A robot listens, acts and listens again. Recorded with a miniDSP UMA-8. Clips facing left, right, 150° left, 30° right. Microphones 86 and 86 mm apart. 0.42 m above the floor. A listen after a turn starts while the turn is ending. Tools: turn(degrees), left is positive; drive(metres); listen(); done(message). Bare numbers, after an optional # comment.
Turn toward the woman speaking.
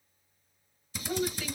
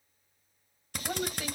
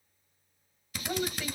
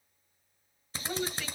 # The woman speaking: 125° right.
turn(-125)
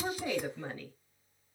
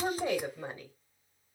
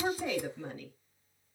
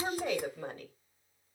# The woman speaking is now 20° right.
turn(-20)
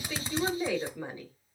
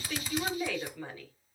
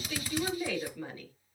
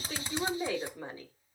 # The woman speaking is now 25° left.
turn(25)
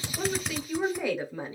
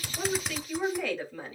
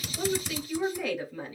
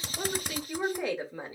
# The woman speaking is now 30° left.
turn(30)
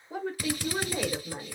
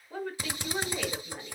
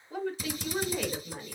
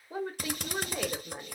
# The woman speaking is now 25° left.
turn(25)
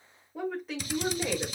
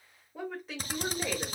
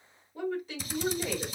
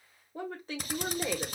done("Found it: a woman speaking, straight ahead.")